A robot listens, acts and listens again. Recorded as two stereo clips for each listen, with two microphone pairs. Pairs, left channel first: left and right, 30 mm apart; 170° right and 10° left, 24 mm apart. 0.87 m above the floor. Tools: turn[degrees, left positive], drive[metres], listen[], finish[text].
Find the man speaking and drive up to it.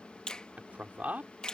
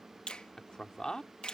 Thought: The man speaking: 115° right.
Action: turn[-115]
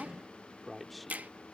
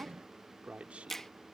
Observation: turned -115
Action: drive[1.0]
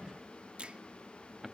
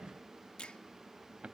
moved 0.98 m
Action: drive[1.0]
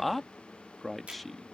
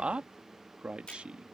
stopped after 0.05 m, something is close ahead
Action: finish[Arrived at the man speaking, straight ahead.]